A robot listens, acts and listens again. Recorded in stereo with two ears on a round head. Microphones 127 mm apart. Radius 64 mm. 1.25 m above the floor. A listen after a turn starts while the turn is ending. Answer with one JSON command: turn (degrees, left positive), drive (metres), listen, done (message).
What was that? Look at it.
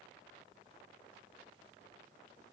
{"listen": true}
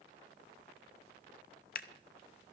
{"turn": 65}
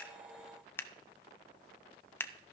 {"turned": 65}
{"turn": 20}
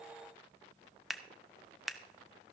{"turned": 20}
{"done": "Facing the scissors."}